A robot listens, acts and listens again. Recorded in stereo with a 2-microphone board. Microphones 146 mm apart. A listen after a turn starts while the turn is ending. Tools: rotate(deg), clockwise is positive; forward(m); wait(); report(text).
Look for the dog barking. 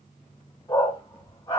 rotate(-25)
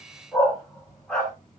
report("Facing the dog barking.")